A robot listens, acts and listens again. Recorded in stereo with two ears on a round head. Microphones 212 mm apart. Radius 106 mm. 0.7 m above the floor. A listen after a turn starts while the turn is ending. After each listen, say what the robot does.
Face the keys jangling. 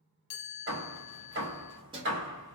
Turn 20° right.
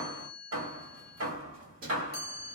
Turn 140° right.
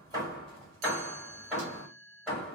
Keep listening.
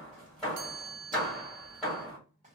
Keep listening.
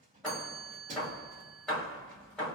Turn 35° right.
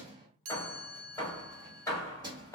Turn 20° right.
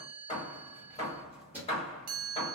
Found it: keys jangling, straight ahead.